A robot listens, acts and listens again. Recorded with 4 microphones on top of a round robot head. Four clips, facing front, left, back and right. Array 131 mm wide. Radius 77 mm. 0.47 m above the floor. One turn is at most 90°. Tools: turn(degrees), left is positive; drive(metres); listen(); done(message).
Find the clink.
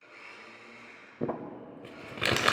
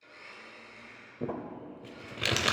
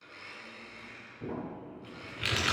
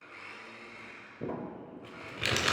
listen()
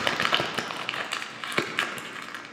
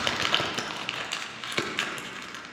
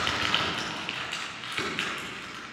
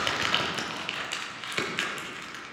listen()
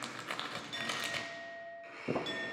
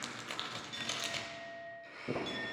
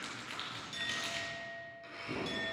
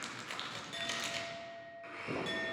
turn(degrees=-70)
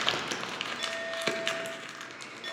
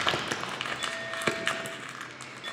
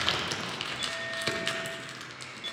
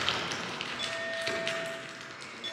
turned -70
turn(degrees=-15)
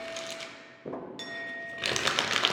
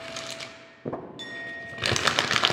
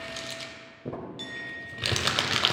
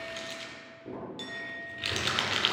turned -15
done("Found it: a clink, straight ahead.")